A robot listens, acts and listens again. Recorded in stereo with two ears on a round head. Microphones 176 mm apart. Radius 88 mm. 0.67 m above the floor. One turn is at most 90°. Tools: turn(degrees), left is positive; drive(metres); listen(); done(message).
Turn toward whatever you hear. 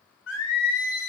turn(degrees=70)
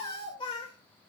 turn(degrees=25)
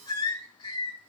turn(degrees=25)
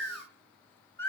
turn(degrees=10)
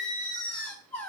done("Found it: singing, straight ahead.")